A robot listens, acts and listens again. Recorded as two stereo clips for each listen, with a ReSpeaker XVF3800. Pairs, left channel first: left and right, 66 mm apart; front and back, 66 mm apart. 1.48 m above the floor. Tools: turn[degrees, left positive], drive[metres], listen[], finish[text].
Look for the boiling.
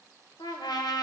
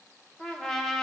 Action: listen[]
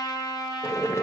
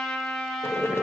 Thought: The boiling: 45° left.
Action: turn[45]
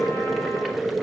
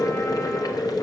Action: finish[Facing the boiling.]